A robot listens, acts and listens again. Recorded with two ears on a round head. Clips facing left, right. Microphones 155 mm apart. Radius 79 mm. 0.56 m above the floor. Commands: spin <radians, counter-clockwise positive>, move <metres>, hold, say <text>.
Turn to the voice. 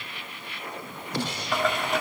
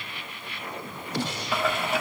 hold
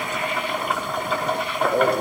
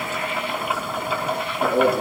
spin -1.57
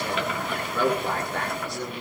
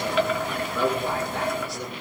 say Found it: a man speaking, straight ahead.